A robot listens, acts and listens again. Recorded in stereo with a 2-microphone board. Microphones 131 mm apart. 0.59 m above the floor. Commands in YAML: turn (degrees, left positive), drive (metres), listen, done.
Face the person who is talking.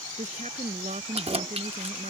turn: -65
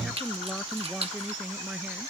done: "Facing the woman speaking."